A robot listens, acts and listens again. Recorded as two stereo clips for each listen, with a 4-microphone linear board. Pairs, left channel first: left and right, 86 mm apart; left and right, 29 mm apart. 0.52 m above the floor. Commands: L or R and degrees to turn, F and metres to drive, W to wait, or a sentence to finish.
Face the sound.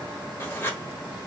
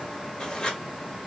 L30
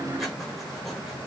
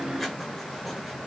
W
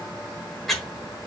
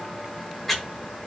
Facing the writing.